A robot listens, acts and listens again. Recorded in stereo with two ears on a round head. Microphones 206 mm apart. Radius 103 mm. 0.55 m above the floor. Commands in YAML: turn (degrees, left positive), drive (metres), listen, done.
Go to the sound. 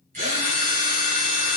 turn: -35
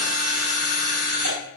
turn: -110
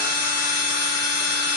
turn: -20
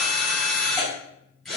drive: 1.0
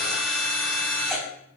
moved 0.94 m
drive: 1.0
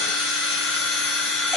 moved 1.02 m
drive: 1.0
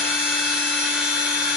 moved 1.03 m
drive: 1.0
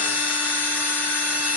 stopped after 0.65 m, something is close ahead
turn: -10
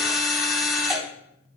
done: "Arrived at the drill, straight ahead."